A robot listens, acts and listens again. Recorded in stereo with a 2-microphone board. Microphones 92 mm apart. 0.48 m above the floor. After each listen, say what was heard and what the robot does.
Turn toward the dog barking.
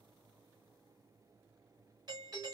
Keep listening.
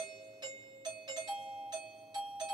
Keep listening.
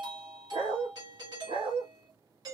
The dog barking: about 75° right or 105° right. Turn 75° right.
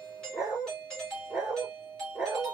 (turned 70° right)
Facing the dog barking.